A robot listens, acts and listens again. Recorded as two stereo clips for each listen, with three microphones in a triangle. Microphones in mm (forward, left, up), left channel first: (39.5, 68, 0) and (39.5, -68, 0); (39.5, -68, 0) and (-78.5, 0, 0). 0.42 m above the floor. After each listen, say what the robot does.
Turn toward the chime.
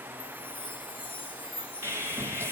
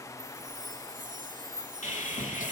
Turn 140° left.
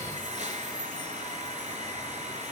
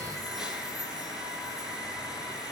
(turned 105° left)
Turn 35° left.
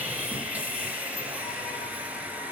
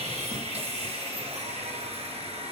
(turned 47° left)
Turn 15° right.
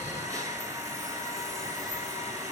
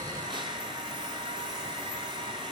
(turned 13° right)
I heard a chime from this way, but can't make it out now.